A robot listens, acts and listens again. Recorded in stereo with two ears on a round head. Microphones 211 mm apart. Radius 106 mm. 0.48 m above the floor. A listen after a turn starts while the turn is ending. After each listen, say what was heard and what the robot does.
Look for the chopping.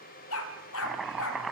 Turn 30° left.
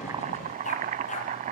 So it is at 30° right. Turn 30° right.
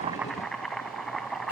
Facing the chopping, 1 to 2 m away.